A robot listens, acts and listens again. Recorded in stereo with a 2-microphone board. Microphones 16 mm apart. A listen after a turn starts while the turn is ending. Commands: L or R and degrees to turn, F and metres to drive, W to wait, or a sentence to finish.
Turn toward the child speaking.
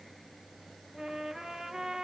W
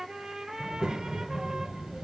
R65
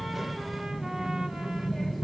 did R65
Facing the child speaking.